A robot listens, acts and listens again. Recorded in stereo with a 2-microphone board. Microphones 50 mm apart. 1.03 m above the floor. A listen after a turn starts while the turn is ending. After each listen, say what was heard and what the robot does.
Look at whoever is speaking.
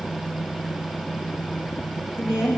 The woman speaking: about 70° left or 110° left. Turn 70° left.
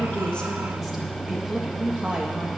So it is at 20° right. Turn 20° right.
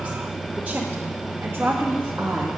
The woman speaking is now 50° right. Turn 50° right.
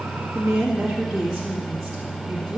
The woman speaking is now 10° right. Turn 10° right.
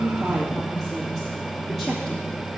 Keep listening.
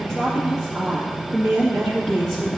Facing the woman speaking, 2 to 4 m away.